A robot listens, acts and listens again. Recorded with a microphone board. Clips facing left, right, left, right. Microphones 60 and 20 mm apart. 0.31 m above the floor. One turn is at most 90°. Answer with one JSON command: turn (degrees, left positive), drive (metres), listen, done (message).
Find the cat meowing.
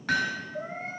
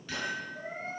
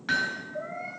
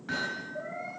{"turn": 90}
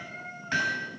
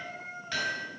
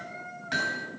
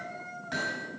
{"done": "Facing the cat meowing."}